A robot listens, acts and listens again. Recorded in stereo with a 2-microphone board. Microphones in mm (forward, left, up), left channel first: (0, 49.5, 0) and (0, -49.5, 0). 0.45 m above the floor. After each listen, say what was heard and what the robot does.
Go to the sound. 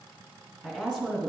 Turn 30° right.
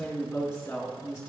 So it is at 20° left. Turn 20° left.
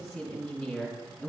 Drive 1.0 m forward.
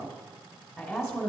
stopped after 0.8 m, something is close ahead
I am next to the woman speaking.